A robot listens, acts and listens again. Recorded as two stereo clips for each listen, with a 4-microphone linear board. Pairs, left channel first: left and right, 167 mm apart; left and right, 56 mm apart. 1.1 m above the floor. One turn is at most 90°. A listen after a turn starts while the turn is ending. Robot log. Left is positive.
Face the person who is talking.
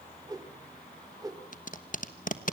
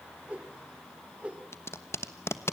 cmd idle
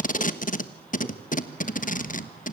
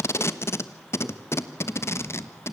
cmd idle
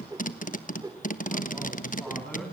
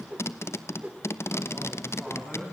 cmd yaw +30
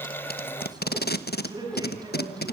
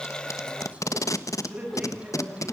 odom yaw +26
note: So it is at 25° right.
cmd yaw -25
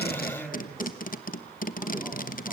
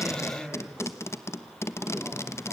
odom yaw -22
end: Found it: a man speaking, straight ahead.